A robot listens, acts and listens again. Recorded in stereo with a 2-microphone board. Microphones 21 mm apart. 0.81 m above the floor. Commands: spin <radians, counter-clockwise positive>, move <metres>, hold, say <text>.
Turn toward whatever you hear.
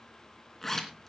spin 0.26
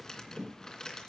spin 2.62
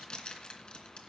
spin 0.87
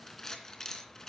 spin 0.44
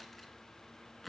say Found it: a zipper, straight ahead, 2 to 4 m away.